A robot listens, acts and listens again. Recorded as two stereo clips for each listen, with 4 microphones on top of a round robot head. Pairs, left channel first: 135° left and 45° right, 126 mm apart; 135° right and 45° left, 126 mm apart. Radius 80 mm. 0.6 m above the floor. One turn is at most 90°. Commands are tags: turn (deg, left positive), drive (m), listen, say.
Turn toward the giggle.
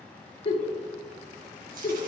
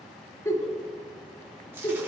<turn deg="90"/>
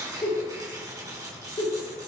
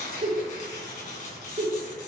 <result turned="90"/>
<turn deg="85"/>
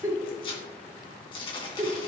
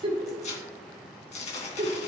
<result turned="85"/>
<turn deg="15"/>
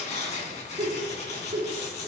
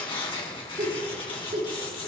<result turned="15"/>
<say>Facing the giggle.</say>